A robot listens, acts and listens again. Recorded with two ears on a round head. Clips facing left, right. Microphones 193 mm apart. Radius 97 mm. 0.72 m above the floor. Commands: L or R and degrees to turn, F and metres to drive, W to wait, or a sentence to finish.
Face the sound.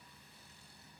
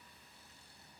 W
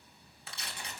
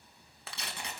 R50
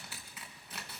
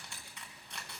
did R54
Found it: tearing paper, straight ahead, 2 to 4 m away.